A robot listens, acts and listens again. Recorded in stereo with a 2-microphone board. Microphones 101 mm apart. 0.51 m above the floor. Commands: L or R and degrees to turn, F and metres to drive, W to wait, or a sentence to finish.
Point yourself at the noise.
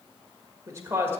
R25
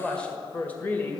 L20
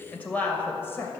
L25
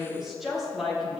Facing the woman speaking, 2 to 4 m away.